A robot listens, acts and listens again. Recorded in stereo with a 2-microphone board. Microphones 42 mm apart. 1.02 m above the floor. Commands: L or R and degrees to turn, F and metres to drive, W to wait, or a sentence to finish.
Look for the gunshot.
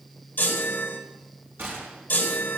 R65
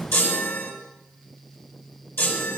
W
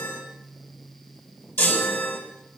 I heard a gunshot, but can't make it out now. It was about straight ahead or 50° right.